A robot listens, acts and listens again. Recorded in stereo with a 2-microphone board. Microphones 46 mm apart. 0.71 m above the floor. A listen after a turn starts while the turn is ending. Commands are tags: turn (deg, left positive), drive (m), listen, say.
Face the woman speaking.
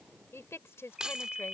<turn deg="90"/>
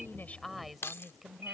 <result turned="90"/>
<say>Found it: a woman speaking, straight ahead.</say>